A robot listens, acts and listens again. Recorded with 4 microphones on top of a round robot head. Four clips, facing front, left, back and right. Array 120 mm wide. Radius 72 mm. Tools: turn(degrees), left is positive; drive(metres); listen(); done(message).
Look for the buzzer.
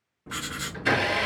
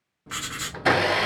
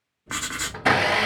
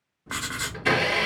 turn(degrees=25)
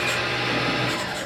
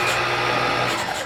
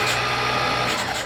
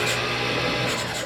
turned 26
listen()
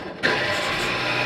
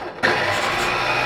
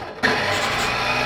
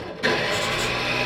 done("Facing the buzzer.")